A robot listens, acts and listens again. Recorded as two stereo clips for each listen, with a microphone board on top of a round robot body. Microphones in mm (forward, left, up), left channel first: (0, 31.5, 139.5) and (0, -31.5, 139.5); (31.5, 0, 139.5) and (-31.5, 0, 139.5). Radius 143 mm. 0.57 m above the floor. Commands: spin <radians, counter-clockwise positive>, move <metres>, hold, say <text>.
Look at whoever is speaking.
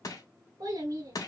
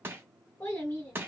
spin -1.05
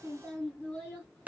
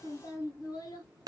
spin 0.35
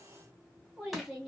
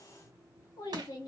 say Facing the child speaking.